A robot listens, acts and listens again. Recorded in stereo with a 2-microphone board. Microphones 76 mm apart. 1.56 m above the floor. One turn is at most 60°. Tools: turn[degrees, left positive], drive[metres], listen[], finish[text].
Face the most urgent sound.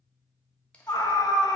Thought: The scream: about 70° left or 110° left.
Action: turn[60]
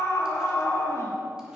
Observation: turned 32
Thought: So it is at 40° left.
Action: turn[40]
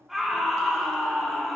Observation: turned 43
Action: finish[Facing the scream.]